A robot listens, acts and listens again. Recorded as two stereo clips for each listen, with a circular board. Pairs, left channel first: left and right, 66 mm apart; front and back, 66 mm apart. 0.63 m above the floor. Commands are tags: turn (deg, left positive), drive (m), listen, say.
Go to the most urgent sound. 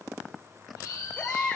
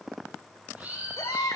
<turn deg="15"/>
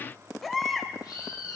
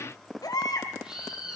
<drive m="1.0"/>
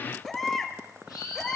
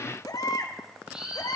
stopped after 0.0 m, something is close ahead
<say>Blocked. The baby crying is further on, straight ahead.</say>